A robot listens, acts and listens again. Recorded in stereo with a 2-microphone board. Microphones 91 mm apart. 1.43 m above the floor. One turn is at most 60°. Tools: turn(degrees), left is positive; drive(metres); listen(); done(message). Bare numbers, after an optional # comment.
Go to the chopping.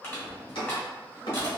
turn(60)
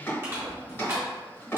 # So it is at 25° left.
turn(25)
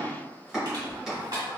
drive(1.0)
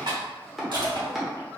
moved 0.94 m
drive(1.0)
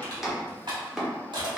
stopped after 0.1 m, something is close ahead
done("Arrived at the chopping, straight ahead.")